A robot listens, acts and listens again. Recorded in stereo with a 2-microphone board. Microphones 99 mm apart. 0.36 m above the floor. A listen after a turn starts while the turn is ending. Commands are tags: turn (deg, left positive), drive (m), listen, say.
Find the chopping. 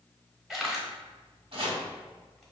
<turn deg="-60"/>
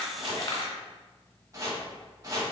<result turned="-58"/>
<turn deg="-40"/>
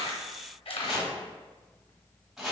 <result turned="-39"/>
<say>Facing the chopping.</say>